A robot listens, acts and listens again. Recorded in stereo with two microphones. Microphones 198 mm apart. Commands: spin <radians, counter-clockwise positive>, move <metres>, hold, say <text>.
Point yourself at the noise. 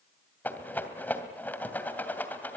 spin 0.52
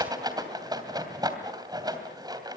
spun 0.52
spin -0.35
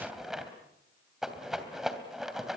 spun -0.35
say Found it: a rattle, straight ahead, 2 to 4 m away.